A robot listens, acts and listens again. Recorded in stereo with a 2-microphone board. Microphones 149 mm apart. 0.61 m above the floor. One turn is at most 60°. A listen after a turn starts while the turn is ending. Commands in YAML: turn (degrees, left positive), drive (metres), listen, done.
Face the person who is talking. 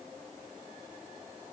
listen: true
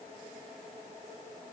listen: true
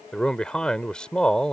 turn: 30
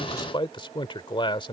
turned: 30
turn: 60
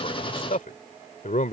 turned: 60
turn: 60
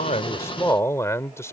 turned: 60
turn: 20
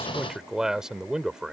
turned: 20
done: "Facing the man speaking."